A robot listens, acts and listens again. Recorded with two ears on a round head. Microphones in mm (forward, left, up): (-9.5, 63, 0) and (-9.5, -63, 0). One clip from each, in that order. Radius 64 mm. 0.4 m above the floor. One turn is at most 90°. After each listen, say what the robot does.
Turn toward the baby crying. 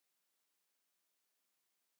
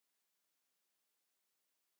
Keep listening.
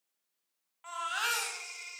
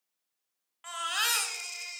Turn 55° right.
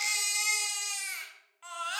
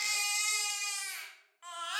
Found it: a baby crying, straight ahead.